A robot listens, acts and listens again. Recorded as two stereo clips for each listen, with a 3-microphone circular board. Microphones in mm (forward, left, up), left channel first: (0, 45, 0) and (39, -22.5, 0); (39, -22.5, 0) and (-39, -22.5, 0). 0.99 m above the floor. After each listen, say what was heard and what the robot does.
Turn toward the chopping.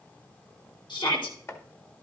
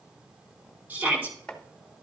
The chopping: 75° left. Turn 75° left.
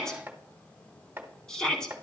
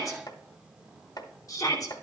Found it: chopping, straight ahead.